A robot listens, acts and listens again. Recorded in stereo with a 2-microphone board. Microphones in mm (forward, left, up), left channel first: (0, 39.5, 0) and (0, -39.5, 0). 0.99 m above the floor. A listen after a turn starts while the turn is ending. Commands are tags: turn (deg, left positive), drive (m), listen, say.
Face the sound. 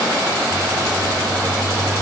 <turn deg="20"/>
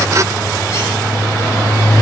<turn deg="140"/>
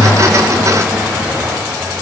<turn deg="-10"/>
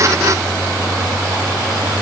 <say>Found it: a bird, straight ahead, over 4 m away.</say>